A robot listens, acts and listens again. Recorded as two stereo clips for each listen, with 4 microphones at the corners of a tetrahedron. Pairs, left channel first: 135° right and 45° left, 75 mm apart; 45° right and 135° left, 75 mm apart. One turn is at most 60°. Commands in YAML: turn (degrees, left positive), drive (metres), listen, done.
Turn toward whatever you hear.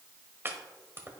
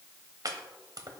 turn: 60
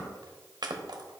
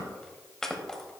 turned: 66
turn: 35
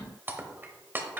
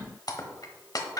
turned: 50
turn: -15
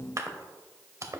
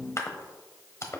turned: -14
done: "Facing the chopping."